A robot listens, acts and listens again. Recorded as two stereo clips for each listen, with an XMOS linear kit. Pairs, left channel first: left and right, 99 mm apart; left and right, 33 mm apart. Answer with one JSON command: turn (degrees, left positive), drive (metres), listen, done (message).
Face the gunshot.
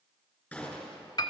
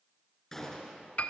{"turn": 30}
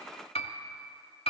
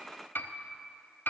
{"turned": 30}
{"listen": true}
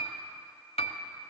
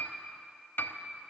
{"done": "I heard a gunshot, but can't make it out now. It was about 20° right or 140° left."}